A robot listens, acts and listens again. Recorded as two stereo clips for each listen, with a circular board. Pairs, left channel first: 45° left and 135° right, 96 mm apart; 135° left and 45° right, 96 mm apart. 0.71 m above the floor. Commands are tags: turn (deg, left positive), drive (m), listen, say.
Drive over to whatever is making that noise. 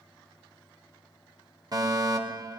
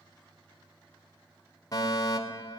<turn deg="180"/>
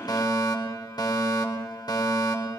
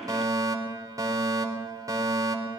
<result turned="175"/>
<drive m="1.0"/>
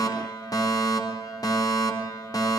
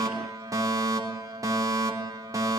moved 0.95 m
<drive m="1.0"/>
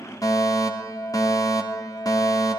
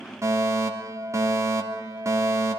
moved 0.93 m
<drive m="1.0"/>
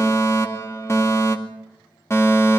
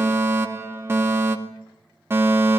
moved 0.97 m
<drive m="1.0"/>
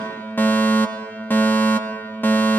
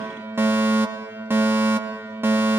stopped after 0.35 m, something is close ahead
<say>Arrived at the fire alarm, straight ahead.</say>